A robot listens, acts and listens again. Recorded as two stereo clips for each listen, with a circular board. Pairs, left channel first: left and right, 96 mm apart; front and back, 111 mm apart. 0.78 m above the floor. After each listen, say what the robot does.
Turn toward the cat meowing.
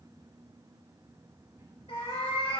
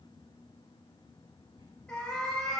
Turn 85° left.
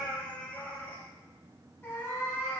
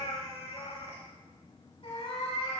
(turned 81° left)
Turn 30° left.
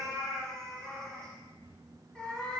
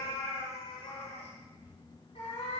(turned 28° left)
Turn 10° left.
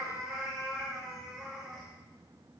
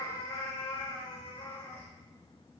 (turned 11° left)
Facing the cat meowing, 2 to 4 m away.